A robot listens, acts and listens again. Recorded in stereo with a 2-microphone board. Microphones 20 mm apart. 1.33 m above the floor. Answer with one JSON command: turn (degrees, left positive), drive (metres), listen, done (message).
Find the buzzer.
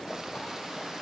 {"listen": true}
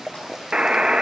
{"turn": -45}
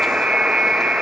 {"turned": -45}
{"turn": -90}
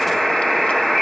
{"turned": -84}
{"done": "Facing the buzzer, under 1 m away."}